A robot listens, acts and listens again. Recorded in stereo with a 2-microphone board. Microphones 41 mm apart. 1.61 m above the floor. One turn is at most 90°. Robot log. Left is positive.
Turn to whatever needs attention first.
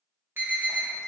note: The alarm: about 60° right or 120° right.
cmd yaw -60
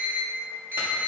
note: So it is at 60° right.
cmd yaw -60
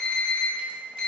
note: The alarm is now 10° left.
cmd yaw +10
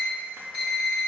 end: Found it: an alarm, straight ahead, 1 to 2 m away.